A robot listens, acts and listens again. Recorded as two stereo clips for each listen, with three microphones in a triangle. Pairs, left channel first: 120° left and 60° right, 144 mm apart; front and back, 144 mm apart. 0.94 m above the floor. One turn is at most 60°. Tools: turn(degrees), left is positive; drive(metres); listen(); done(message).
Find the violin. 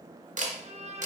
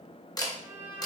turn(degrees=-60)
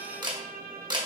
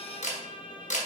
turn(degrees=-55)
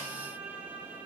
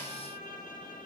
turn(degrees=15)
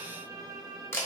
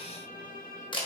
done("Found it: a violin, straight ahead, under 1 m away.")